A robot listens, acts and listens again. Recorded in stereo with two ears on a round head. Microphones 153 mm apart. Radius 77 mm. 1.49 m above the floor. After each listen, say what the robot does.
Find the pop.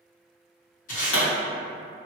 Turn 90° left.
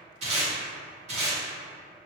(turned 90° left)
I heard a pop from this way, but can't make it out now.